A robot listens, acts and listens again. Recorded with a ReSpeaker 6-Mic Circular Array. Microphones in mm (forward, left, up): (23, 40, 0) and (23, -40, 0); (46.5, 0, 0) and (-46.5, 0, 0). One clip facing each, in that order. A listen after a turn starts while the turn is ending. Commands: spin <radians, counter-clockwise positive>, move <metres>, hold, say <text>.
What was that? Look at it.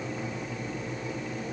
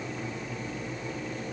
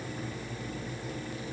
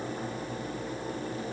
hold
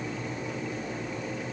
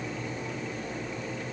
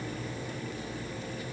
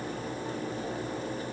hold
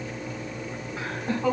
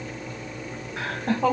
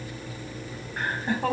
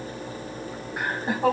spin -1.75
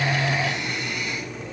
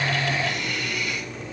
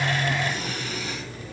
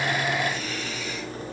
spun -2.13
spin 0.44
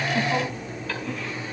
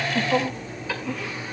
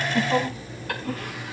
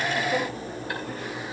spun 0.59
spin -0.17
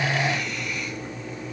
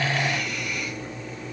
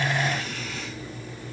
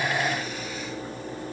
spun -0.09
hold
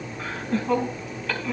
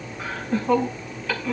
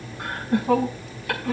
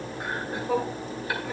say Facing the laughter.